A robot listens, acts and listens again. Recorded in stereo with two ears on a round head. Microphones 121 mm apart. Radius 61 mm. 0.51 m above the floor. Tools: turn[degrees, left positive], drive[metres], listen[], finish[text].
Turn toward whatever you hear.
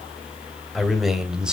Action: turn[-30]
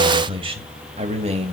Thought: So it is at 130° right.
Action: turn[-130]
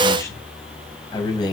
Thought: The man speaking is now 30° left.
Action: turn[30]
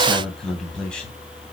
Action: finish[Found it: a man speaking, straight ahead, 2 to 4 m away.]